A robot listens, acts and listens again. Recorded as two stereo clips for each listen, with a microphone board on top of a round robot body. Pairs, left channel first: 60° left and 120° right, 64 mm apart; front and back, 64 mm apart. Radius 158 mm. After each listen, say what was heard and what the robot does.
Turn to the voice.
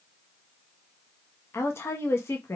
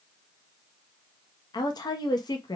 The woman speaking: 10° left. Turn 10° left.
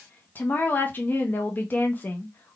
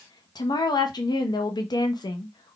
Found it: a woman speaking, straight ahead.